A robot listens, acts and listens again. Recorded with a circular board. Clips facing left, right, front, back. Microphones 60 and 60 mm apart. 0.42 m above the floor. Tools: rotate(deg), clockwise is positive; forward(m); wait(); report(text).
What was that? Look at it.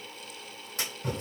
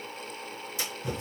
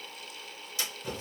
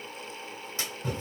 rotate(-125)
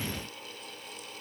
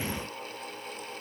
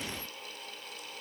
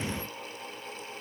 report("Facing where the splash came from. I can't hear it now.")